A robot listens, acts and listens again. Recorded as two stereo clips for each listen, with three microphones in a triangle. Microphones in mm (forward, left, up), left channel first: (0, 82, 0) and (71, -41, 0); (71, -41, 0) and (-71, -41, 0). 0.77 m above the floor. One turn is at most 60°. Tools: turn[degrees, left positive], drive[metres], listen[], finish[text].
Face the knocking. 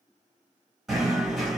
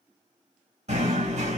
Thought: The knocking: 150° right.
Action: turn[-60]
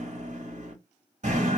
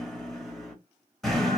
Thought: The knocking is now 85° right.
Action: turn[-60]
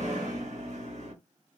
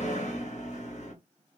Thought: The knocking is now 30° right.
Action: turn[-30]
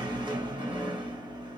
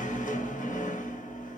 Action: finish[Found it: knocking, straight ahead.]